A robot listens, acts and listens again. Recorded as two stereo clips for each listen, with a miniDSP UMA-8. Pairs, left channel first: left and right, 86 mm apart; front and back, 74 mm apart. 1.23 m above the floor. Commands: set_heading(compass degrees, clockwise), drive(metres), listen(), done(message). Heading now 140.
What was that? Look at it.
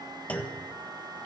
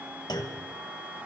set_heading(125)
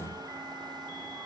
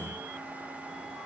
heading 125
done("I heard a clunk from this way, but can't make it out now.")